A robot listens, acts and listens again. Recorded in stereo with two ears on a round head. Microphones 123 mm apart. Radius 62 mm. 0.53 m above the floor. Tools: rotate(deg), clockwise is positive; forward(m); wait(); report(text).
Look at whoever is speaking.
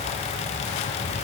wait()
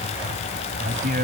rotate(65)
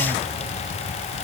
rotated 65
wait()
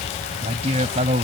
rotate(45)
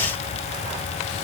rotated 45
wait()
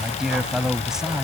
report("Facing the man speaking.")